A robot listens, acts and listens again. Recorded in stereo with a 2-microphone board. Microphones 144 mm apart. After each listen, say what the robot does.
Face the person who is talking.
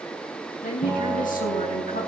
Turn 70° left.
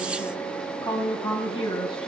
Turn 40° left.
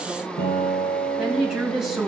Found it: a woman speaking, straight ahead, over 4 m away.